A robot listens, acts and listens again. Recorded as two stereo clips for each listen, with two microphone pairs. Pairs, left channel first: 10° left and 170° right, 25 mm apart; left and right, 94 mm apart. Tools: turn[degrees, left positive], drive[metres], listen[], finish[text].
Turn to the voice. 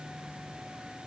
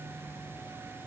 Action: listen[]
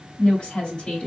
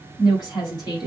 Thought: The woman speaking: 55° left.
Action: turn[55]
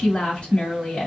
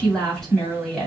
Thought: The woman speaking is now 10° left.
Action: turn[10]
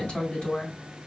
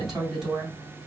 Action: finish[Found it: a woman speaking, straight ahead.]